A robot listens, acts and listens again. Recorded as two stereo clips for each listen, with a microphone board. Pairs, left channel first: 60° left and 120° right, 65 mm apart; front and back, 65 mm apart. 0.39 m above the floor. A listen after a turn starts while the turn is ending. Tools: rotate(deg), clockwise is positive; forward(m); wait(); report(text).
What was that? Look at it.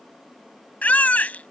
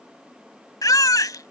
report("Facing the baby crying.")